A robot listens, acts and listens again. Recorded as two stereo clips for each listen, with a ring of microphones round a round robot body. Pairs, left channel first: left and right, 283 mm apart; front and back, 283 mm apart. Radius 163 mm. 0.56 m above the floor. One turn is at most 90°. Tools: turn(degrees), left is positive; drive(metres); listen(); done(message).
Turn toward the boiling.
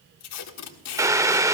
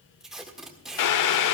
turn(degrees=-10)
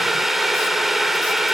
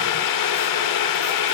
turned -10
done("Facing the boiling.")